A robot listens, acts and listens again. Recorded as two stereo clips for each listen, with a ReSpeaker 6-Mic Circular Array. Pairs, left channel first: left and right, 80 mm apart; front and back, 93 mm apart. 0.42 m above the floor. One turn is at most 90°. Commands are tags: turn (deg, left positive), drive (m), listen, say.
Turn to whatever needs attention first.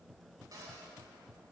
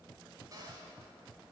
<listen/>
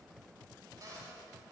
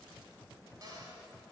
<listen/>
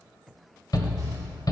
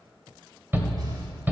<turn deg="90"/>
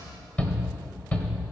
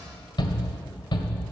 <turn deg="20"/>
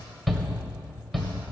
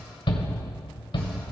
<say>Found it: a shout, straight ahead, 1 to 2 m away.</say>